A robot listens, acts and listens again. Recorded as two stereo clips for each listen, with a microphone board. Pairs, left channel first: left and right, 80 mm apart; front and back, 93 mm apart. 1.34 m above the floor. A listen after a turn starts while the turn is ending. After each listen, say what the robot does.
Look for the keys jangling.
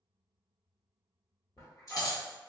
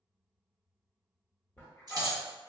Turn 130° left.
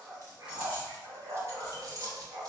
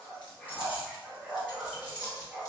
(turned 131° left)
Turn 45° right.
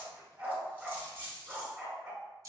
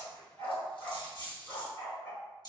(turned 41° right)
Turn 40° right.
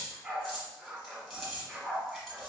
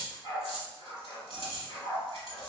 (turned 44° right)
Found it: keys jangling, straight ahead.